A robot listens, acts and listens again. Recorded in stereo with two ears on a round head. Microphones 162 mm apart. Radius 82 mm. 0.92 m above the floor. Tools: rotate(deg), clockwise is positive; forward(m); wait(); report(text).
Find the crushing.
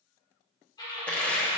rotate(-30)
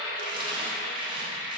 wait()
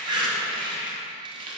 rotate(25)
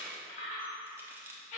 wait()
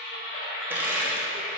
rotate(10)
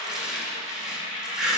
report("Facing the crushing.")